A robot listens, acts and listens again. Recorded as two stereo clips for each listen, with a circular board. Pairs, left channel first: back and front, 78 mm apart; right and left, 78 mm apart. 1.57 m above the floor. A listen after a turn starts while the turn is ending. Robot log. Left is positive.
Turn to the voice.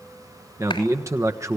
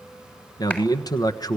note: The man speaking: 50° right.
cmd yaw -50
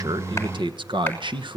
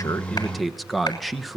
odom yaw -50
end: Found it: a man speaking, straight ahead, 1 to 2 m away.